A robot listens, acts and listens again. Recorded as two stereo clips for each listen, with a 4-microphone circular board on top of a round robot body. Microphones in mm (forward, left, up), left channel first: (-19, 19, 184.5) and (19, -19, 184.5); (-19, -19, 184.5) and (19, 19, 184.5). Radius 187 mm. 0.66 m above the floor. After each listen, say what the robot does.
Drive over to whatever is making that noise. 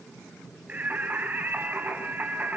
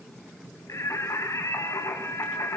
Turn 105° right.
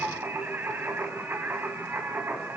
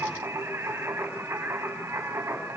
Drive 1.0 m forward.
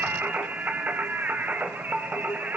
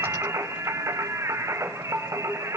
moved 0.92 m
Turn 15° left.
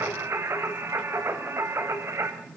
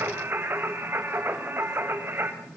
Drive 1.0 m forward.
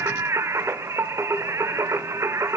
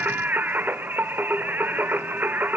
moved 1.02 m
Turn 10° right.
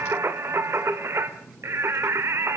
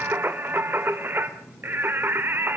Drive 1.0 m forward.
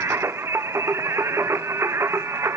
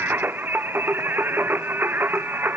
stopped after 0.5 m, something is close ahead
Turn 10° right.
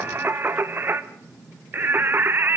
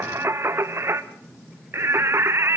Arrived at the singing, straight ahead.